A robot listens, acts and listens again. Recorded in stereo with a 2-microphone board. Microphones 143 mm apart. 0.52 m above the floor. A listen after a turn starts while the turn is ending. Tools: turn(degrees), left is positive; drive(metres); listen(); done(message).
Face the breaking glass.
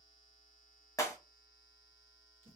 turn(degrees=20)
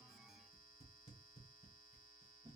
listen()
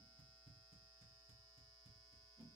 done("I heard breaking glass, but can't make it out now. It was about straight ahead or 140° left.")